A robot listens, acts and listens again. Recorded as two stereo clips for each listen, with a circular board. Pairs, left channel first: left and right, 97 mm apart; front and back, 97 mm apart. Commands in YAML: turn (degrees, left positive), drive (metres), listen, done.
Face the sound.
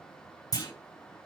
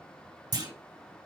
turn: 135
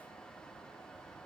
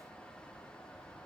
done: "I heard a clunk from this way, but can't make it out now."